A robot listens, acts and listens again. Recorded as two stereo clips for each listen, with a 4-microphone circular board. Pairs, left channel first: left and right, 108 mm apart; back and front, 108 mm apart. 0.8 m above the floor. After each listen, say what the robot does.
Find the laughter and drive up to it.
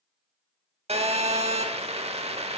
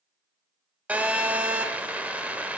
Keep listening.
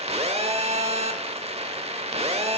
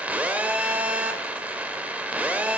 Keep listening.
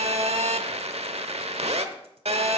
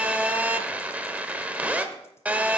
I can't make out laughter to turn to.